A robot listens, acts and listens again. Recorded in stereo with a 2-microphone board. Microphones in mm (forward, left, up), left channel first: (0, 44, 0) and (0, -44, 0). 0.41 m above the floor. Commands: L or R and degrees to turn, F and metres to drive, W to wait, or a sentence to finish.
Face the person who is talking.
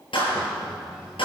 R30
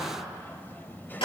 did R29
L25
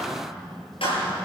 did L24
Facing the child speaking, 1 to 2 m away.